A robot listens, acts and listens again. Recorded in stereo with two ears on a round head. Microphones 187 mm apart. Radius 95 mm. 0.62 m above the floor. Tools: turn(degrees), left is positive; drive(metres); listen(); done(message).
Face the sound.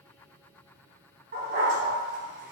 turn(degrees=-40)
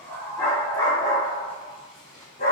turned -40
turn(degrees=35)
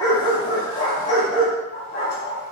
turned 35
turn(degrees=40)
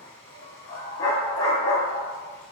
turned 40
turn(degrees=25)
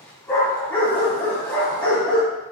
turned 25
done("Facing the dog barking.")